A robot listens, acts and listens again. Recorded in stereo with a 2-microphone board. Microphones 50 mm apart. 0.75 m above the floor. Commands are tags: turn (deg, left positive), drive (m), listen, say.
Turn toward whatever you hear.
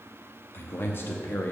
<turn deg="50"/>
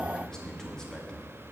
<turn deg="15"/>
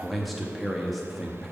<say>Found it: a man speaking, straight ahead, under 1 m away.</say>